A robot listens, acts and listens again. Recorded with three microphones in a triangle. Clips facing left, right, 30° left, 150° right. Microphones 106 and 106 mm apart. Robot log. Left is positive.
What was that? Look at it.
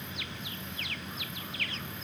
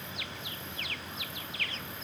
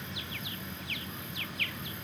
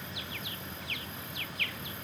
cmd idle
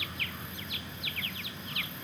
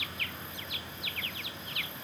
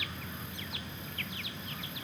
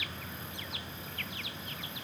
cmd idle
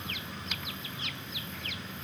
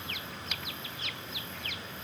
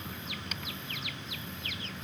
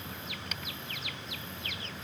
end: I can't make out anything to turn to.